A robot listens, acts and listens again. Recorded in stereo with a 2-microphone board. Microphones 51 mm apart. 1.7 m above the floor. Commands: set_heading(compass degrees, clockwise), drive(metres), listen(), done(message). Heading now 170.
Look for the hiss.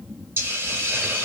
set_heading(220)
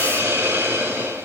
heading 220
set_heading(290)
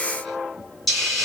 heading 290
done("Facing the hiss.")